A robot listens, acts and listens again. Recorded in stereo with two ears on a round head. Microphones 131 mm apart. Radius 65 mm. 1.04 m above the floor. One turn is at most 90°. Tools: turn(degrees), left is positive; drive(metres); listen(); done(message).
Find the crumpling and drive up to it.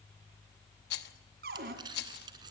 turn(degrees=-30)
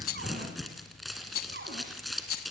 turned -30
drive(metres=1.0)
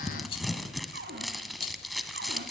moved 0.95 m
drive(metres=1.0)
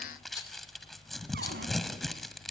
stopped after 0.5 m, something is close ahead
done("Arrived at the crumpling, straight ahead.")